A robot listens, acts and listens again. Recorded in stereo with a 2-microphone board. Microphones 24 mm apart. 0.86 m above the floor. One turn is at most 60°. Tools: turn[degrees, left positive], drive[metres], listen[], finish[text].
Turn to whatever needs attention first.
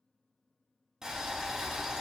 Action: listen[]
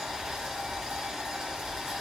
Action: listen[]
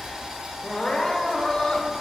Thought: The crying: about 45° left or 135° left.
Action: turn[45]
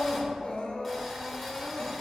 Thought: So it is at 85° left.
Action: turn[60]
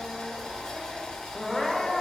Thought: The crying is now 25° left.
Action: turn[25]
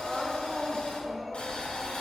Action: finish[Found it: crying, straight ahead, under 1 m away.]